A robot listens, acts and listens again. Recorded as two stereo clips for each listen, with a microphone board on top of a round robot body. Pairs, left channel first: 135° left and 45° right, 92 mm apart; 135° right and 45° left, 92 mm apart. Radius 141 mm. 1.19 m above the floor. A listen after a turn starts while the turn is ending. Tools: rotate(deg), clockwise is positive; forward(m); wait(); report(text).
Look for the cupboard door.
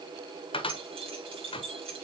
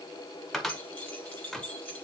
rotate(-140)
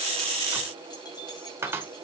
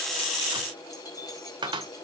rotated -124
rotate(-15)
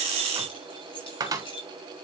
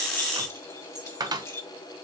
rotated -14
report("Found it: a cupboard door, straight ahead, 1 to 2 m away.")